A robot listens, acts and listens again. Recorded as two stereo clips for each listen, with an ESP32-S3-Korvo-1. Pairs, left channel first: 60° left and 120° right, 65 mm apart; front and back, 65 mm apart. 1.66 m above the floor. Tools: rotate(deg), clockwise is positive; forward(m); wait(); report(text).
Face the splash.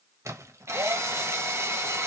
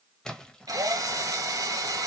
rotate(80)
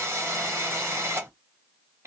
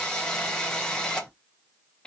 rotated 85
report("Facing where the splash came from. I can't hear it now.")